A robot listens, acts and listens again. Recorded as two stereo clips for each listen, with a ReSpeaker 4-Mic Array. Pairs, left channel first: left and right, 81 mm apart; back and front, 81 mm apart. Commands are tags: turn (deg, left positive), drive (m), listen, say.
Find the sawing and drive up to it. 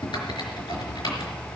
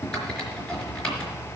<listen/>
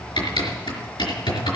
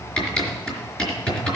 <listen/>
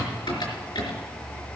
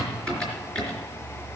<say>I can't make out sawing, only typing on a keyboard.</say>